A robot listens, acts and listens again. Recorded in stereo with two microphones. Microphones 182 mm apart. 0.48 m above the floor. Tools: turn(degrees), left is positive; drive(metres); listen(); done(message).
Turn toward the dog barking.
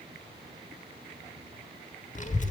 listen()
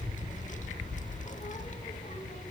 listen()
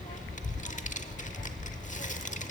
done("I can't make out a dog barking to turn to.")